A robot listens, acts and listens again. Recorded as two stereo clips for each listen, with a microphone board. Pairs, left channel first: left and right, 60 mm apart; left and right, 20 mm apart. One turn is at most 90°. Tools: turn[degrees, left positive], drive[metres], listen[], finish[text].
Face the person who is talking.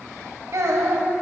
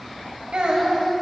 Thought: The child speaking: about 50° right or 130° right.
Action: turn[-50]
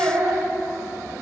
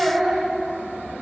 Thought: So it is at 80° right.
Action: turn[-80]
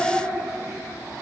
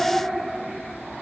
Action: finish[Found it: a child speaking, straight ahead.]